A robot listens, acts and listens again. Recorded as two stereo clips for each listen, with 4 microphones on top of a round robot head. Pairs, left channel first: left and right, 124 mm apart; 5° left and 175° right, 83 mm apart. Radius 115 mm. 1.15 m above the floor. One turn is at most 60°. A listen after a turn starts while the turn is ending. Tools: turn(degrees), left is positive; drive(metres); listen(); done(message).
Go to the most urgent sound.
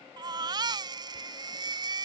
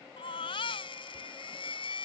turn(degrees=-35)
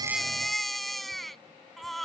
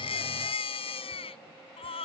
drive(metres=1.0)
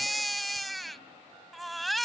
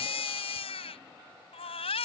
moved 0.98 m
drive(metres=1.0)
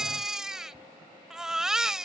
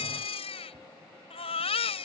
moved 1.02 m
drive(metres=1.0)
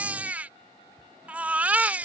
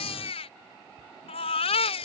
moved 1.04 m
turn(degrees=-10)
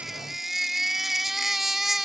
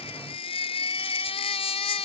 drive(metres=1.0)
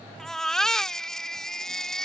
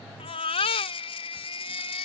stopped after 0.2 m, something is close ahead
done("I am next to the baby crying.")